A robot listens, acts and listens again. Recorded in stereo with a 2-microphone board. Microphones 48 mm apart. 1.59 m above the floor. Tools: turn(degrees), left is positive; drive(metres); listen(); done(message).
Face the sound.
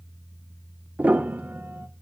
turn(degrees=-35)
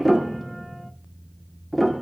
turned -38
done("Facing the piano.")